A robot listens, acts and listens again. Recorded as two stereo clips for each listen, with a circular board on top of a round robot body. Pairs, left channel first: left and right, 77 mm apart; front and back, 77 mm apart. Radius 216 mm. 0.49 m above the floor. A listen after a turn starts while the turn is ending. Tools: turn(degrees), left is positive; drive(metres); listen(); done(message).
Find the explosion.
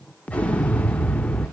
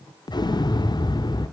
turn(degrees=15)
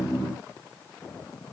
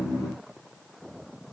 done("I heard an explosion from this way, but can't make it out now.")